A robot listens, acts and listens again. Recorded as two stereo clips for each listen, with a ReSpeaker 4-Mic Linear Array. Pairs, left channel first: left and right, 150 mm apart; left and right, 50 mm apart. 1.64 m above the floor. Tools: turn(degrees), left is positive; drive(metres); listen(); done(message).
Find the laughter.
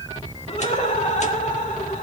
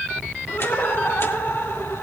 turn(degrees=60)
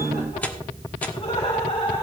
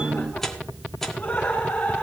turn(degrees=35)
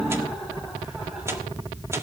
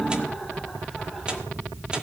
listen()
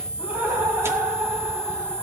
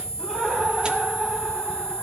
turn(degrees=-15)
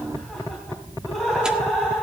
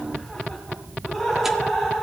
done("Found it: laughter, straight ahead, 2 to 4 m away.")